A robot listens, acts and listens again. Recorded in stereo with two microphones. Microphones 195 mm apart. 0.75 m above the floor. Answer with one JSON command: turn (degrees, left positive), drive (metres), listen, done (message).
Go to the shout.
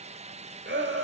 {"turn": -70}
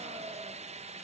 {"listen": true}
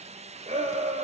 {"turn": -40}
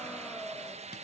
{"drive": 1.0}
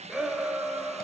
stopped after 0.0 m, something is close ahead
{"done": "Something is in my way. I am facing the shout but have not reached it."}